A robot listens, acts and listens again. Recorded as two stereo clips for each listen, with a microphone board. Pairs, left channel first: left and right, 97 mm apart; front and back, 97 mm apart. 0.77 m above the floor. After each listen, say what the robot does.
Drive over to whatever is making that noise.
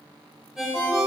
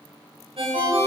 Turn 175° right.
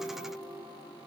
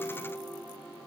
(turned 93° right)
Turn 80° right.
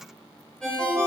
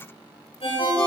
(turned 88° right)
Turn 10° left.
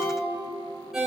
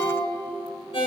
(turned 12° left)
Drive 1.0 m forward.
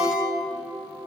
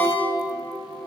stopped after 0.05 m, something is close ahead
Turn 10° right.
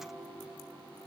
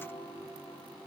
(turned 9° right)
Keep listening.
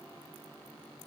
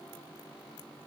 Keep listening.
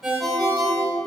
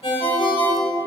Something is in my way. I am facing the ringtone but have not reached it.